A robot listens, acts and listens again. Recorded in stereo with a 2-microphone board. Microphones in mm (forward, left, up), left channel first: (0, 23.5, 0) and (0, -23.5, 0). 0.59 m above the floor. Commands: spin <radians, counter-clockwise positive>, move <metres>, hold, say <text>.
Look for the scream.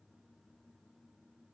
hold
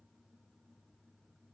hold
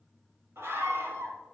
spin -1.22
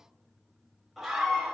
say Found it: a scream, straight ahead, 2 to 4 m away.